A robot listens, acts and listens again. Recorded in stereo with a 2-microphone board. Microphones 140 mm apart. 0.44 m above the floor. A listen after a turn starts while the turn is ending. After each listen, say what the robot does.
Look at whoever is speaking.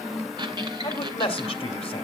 Turn 45° left.
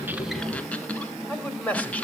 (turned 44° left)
Turn 15° left.
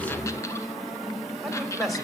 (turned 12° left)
Found it: a man speaking, straight ahead, 2 to 4 m away.